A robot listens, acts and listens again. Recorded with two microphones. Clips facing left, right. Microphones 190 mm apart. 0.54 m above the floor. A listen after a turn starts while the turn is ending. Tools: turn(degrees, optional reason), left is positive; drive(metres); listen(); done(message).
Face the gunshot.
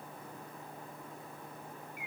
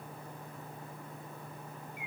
listen()
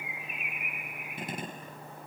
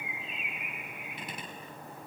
turn(degrees=50, reason="The gunshot: about 50° left or 130° left.")
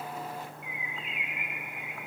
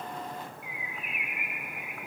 listen()
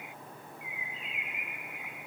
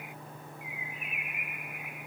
done("I heard a gunshot, but can't make it out now. It was about straight ahead or 80° left.")